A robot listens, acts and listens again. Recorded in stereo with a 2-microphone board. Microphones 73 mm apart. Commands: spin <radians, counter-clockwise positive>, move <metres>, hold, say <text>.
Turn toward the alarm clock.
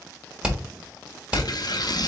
hold
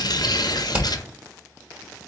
hold
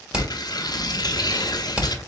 say I can't make out an alarm clock to turn to.